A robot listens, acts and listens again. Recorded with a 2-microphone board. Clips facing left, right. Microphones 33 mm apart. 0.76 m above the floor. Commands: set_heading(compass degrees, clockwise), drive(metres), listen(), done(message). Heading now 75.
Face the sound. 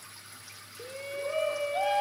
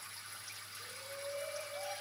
set_heading(10)
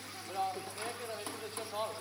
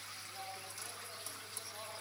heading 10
set_heading(325)
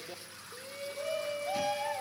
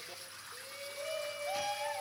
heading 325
done("Found it: a shout, straight ahead, 1 to 2 m away.")